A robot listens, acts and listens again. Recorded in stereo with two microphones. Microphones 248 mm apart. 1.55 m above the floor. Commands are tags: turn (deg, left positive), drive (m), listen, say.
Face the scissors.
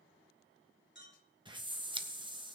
<turn deg="-20"/>
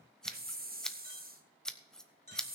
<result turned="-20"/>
<say>Found it: scissors, straight ahead.</say>